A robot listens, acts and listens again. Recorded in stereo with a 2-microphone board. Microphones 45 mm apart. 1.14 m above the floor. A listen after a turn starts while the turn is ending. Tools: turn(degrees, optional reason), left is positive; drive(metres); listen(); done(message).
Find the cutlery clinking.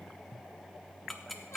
listen()
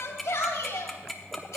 listen()
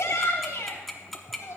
done("I can't make out cutlery clinking, only ticking and a shout.")